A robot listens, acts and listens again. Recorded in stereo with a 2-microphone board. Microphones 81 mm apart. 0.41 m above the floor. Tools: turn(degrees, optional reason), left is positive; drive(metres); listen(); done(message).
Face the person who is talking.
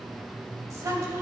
turn(degrees=-40, reason="The woman speaking: about 40° right or 140° right.")
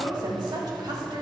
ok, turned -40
turn(degrees=-90, reason="So it is at 90° right.")
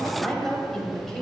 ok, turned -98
turn(degrees=10, reason="The woman speaking is now 10° left.")
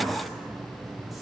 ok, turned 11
listen()
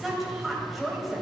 done("Found it: a woman speaking, straight ahead.")